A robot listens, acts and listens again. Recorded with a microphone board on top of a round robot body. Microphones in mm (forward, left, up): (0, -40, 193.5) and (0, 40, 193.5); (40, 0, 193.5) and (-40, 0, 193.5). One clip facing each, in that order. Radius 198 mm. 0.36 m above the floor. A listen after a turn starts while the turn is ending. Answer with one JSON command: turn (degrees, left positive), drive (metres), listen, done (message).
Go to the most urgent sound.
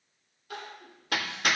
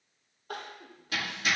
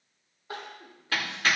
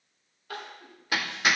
{"turn": 65}
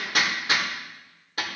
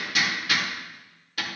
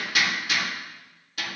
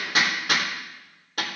{"listen": true}
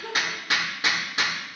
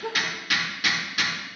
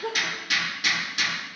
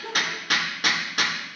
{"turn": 20}
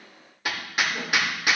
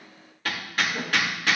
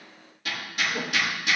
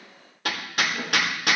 {"drive": 1.0}
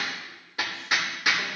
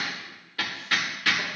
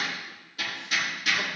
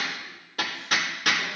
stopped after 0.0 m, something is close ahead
{"listen": true}
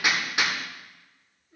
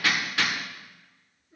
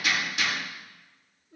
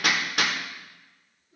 {"done": "Something is in my way. I am facing the crying but have not reached it."}